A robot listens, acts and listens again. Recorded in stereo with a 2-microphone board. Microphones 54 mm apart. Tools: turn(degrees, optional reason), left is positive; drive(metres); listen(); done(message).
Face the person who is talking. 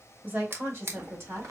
turn(degrees=-50, reason="The woman speaking: about 50° right or 130° right.")
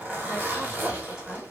listen()
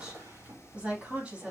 turn(degrees=-25, reason="So it is at 25° right.")
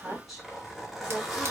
done("Facing the woman speaking.")